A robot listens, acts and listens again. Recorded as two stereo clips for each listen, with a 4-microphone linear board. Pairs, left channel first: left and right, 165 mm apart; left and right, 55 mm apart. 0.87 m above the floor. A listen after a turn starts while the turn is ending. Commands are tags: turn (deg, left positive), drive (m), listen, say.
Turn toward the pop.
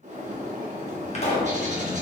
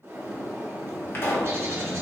<turn deg="40"/>
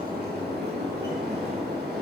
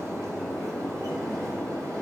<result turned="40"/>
<listen/>
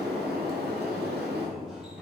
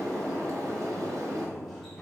<say>I heard a pop, but can't make it out now. It was about straight ahead or 100° left.</say>